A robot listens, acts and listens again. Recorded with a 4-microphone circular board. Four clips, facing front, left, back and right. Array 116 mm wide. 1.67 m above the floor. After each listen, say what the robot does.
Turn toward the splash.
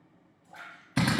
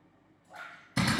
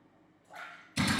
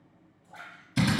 Turn 160° left.
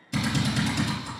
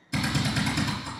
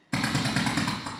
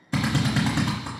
I heard a splash from this way, but can't make it out now.